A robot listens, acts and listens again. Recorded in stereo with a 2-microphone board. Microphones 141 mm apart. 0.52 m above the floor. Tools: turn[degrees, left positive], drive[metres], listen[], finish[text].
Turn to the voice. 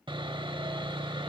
Action: listen[]
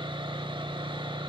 Action: listen[]
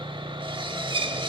Action: finish[I can't make out anyone speaking, only sawing.]